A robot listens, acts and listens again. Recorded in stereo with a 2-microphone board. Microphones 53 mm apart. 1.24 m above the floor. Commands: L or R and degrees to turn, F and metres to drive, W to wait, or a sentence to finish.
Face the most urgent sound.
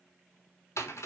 W
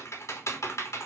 W
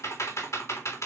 I can't make out anything urgent, only typing on a keyboard.